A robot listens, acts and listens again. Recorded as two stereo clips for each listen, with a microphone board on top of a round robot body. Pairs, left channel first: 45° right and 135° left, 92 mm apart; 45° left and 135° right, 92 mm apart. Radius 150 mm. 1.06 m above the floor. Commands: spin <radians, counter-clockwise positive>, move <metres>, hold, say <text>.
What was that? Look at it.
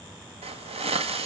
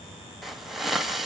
spin 2.36
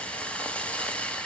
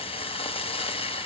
spin 0.61
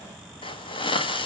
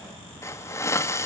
spin -0.26
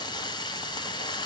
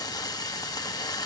say Found it: a hiss, straight ahead, 1 to 2 m away.